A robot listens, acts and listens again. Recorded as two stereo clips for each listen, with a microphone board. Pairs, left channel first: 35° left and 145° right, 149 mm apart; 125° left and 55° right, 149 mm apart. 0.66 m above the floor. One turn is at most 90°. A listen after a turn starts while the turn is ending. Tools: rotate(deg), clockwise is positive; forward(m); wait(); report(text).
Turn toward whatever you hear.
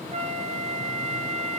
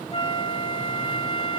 rotate(-90)
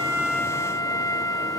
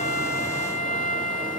rotate(-90)
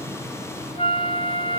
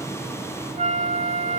rotate(15)
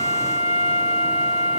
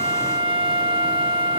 report("Found it: a flute, straight ahead, 2 to 4 m away.")